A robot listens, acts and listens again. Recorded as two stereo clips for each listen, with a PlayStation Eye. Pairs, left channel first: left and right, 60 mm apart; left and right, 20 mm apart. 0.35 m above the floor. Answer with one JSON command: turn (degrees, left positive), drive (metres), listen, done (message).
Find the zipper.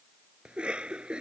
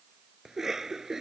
{"listen": true}
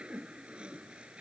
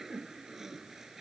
{"listen": true}
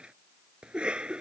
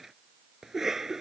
{"done": "I can't make out a zipper to turn to."}